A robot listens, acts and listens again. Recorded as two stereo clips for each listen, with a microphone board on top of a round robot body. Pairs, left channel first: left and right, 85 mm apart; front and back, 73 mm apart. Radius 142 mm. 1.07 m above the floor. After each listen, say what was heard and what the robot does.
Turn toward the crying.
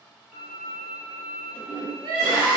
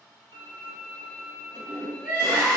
The crying: 105° right. Turn 105° right.
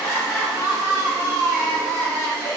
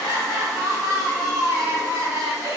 The crying is now 35° left. Turn 35° left.
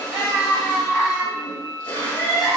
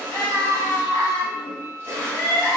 The crying is now 10° left. Turn 10° left.
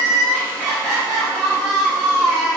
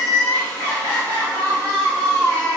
Facing the crying.